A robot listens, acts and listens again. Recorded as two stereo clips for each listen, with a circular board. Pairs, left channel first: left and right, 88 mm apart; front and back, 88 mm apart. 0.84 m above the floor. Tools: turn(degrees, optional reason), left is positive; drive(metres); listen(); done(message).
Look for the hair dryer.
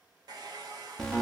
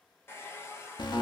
turn(degrees=-60, reason="The hair dryer: 60° right.")
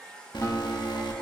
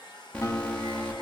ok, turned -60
turn(degrees=10, reason="The hair dryer is now 10° left.")
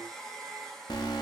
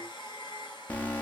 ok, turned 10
done("Facing the hair dryer.")